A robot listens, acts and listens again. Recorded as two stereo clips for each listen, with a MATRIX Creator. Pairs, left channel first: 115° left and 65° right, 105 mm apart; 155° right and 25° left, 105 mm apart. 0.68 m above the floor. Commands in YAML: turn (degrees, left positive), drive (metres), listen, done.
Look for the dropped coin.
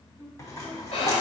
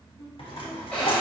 turn: 170
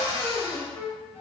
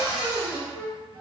done: "Facing where the dropped coin came from. I can't hear it now."